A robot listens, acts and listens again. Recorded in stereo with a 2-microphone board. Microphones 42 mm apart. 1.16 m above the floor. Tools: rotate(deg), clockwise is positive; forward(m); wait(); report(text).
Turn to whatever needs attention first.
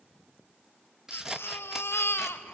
rotate(-90)
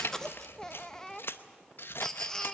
rotate(-15)
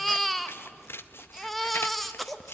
report("Found it: a baby crying, straight ahead.")